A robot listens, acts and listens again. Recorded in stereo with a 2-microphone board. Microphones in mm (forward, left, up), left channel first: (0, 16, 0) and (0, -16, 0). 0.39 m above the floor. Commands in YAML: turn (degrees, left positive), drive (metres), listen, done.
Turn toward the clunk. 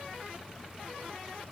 listen: true
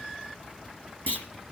turn: 70
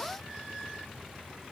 listen: true
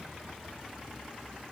done: "I heard a clunk, but can't make it out now. It was about straight ahead or 40° left."